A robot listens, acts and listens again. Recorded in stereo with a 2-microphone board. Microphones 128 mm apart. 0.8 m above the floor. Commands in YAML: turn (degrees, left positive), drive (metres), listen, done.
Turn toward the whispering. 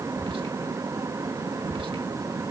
turn: -40
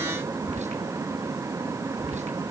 turn: -90
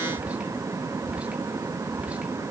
turn: -10
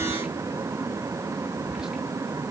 done: "Found it: whispering, straight ahead."